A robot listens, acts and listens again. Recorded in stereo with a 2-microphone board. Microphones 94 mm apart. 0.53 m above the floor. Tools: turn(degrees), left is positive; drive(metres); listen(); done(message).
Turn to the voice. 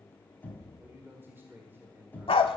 turn(degrees=-25)
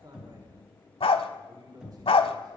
turn(degrees=-125)
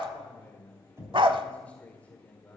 turn(degrees=15)
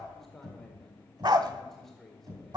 done("Facing the man speaking, 1 to 2 m away.")